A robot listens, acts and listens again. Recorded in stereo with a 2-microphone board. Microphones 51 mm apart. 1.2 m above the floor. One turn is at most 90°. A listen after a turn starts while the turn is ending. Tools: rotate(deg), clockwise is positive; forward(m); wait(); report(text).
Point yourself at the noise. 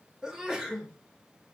rotate(30)
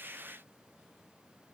wait()
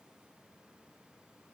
report("I heard a sneeze, but can't make it out now. It was about 15° left or 135° right.")